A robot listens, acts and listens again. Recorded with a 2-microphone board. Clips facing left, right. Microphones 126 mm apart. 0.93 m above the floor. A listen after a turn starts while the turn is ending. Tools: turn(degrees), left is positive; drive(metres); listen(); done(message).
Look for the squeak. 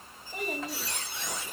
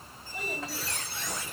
turn(degrees=20)
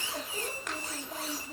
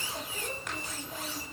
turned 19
turn(degrees=140)
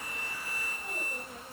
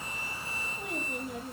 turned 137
listen()
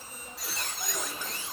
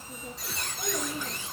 done("Found it: a squeak, straight ahead, 2 to 4 m away.")